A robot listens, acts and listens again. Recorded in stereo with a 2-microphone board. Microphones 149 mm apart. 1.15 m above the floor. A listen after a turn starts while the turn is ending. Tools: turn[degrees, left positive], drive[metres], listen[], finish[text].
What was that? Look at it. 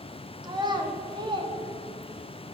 Thought: The child speaking: about 30° right or 150° right.
Action: turn[-30]
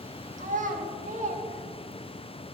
Thought: So it is at 115° right.
Action: turn[-115]
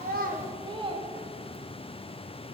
Thought: The child speaking is now 35° right.
Action: turn[-35]
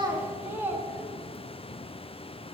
Thought: The child speaking is now 15° right.
Action: turn[-15]
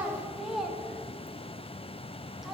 Action: finish[Facing the child speaking, 1 to 2 m away.]